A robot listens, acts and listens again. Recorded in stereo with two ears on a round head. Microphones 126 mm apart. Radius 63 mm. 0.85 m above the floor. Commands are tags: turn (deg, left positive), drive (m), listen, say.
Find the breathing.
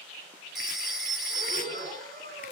<turn deg="-60"/>
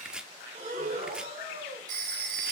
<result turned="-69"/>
<turn deg="-45"/>
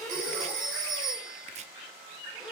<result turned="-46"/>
<say>Found it: breathing, straight ahead.</say>